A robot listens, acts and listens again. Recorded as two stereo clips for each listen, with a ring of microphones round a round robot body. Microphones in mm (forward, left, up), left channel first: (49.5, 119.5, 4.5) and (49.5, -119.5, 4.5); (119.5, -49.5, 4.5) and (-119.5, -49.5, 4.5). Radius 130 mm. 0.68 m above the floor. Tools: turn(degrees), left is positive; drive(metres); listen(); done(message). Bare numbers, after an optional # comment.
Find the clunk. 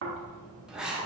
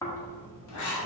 listen()
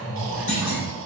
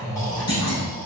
# The clunk: 35° left.
turn(35)
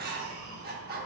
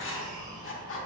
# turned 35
done("I heard a clunk from this way, but can't make it out now.")